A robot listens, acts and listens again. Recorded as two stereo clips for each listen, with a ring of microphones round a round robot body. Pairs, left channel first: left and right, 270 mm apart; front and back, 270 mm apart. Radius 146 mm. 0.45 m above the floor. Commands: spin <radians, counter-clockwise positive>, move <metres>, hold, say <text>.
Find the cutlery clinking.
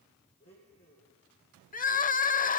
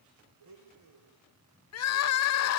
hold
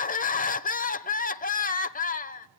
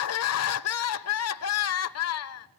hold
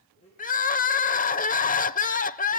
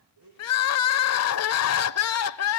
say I can't make out cutlery clinking to turn to.